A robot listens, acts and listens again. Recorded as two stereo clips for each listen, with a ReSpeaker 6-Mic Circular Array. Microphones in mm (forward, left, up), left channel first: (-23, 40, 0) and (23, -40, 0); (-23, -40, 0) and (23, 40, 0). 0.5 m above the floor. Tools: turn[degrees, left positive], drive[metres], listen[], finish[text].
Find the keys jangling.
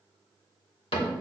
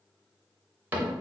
Action: listen[]
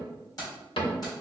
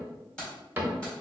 Thought: The keys jangling: 160° left.
Action: turn[160]
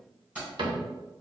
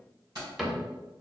Thought: The keys jangling is now 15° left.
Action: turn[15]
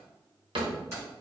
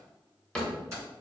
Action: finish[Facing the keys jangling.]